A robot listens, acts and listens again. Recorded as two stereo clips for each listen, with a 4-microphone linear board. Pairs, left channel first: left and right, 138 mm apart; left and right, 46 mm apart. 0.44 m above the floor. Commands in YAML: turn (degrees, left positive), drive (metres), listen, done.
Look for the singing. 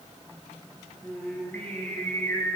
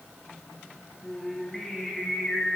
turn: 20
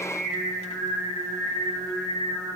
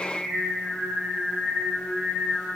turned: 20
turn: 30
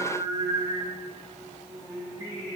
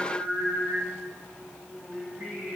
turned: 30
turn: -20
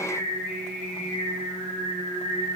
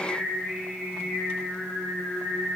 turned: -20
done: "Facing the singing, over 4 m away."